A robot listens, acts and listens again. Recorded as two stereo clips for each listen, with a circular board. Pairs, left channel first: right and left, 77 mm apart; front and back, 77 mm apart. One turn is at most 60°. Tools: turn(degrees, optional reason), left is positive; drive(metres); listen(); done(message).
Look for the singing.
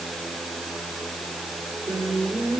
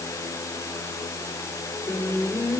turn(degrees=60, reason="The singing: 95° left.")
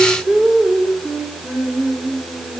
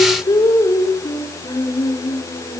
turn(degrees=25, reason="The singing is now 25° left.")
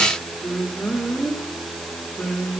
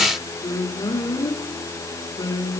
done("Facing the singing, 2 to 4 m away.")